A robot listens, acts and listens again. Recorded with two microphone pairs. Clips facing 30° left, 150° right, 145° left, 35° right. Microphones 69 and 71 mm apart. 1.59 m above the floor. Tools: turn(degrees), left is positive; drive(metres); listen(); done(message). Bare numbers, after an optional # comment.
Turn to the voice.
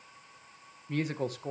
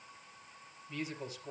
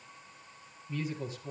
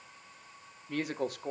done("Facing the woman speaking, 1 to 2 m away.")